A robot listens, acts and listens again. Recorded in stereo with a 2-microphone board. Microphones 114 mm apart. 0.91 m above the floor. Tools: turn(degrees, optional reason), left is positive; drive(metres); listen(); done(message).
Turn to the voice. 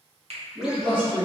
turn(degrees=-50, reason="The man speaking: about 50° right or 130° right.")
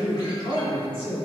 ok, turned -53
turn(degrees=-65, reason="So it is at 65° right.")
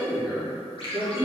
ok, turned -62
done("Found it: a man speaking, straight ahead, 1 to 2 m away.")